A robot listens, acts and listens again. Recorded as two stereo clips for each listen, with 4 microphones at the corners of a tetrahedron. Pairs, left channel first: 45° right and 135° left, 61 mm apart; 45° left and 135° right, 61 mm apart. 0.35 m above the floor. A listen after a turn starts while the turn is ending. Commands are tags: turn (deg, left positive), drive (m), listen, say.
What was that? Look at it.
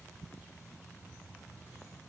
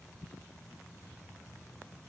<listen/>
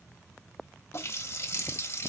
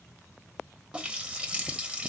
<turn deg="-65"/>
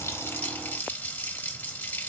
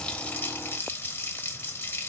<say>Found it: a running tap, straight ahead, under 1 m away.</say>